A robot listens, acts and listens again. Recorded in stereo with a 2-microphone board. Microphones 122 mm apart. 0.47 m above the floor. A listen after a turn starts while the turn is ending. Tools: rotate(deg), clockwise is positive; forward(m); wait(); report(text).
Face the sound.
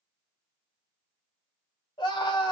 rotate(-45)
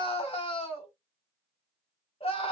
rotate(-80)
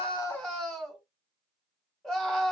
report("Facing the scream.")